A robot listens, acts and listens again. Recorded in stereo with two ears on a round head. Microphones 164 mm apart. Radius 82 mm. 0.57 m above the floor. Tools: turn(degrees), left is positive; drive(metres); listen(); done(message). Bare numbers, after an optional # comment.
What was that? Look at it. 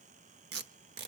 # The tape being pulled: about 60° right or 120° right.
turn(-60)
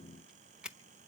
done("Facing the tape being pulled.")